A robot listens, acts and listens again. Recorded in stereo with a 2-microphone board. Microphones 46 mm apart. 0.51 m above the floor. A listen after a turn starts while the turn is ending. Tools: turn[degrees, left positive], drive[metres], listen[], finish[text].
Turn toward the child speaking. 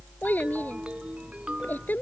Thought: The child speaking: about 45° left or 135° left.
Action: turn[45]
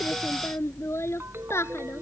Thought: So it is at 80° left.
Action: turn[80]
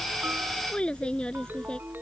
Thought: The child speaking is now 20° left.
Action: turn[20]
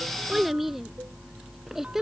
Thought: The child speaking is now 10° right.
Action: turn[-10]
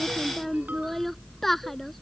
Action: finish[Found it: a child speaking, straight ahead.]